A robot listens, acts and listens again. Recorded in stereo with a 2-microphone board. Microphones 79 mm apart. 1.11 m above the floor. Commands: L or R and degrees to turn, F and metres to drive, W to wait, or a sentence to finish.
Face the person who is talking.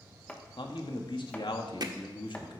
L90
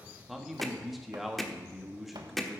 Facing the man speaking, 1 to 2 m away.